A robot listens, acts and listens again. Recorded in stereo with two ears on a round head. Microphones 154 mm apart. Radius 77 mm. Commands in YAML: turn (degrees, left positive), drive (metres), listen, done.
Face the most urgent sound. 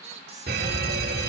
turn: -60
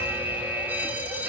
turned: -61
turn: -10
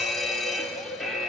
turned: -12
done: "Facing the fire alarm, 2 to 4 m away."